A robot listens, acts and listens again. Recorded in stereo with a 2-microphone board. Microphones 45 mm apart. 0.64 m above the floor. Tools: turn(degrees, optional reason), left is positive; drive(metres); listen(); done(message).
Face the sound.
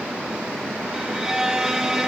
turn(degrees=-30)
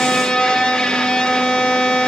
turn(degrees=15, reason="So it is at 15° left.")
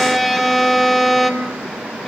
done("Facing the violin, 2 to 4 m away.")